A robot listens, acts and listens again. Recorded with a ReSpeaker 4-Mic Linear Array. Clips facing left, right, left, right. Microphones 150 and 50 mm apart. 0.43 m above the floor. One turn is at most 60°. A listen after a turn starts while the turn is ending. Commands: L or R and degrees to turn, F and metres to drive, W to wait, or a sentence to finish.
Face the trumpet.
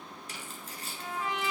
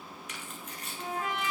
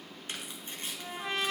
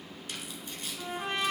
R45
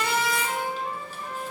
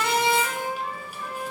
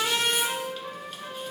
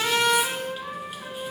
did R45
R60
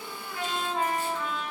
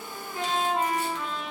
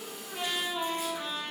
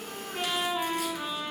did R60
R15
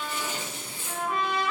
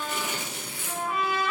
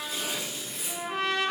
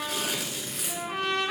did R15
Facing the trumpet, 1 to 2 m away.